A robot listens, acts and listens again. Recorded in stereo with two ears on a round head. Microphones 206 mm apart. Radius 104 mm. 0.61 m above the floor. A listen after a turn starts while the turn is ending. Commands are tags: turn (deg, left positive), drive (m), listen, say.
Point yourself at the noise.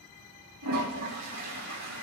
<turn deg="-90"/>
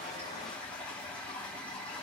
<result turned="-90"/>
<say>Facing the toilet flushing.</say>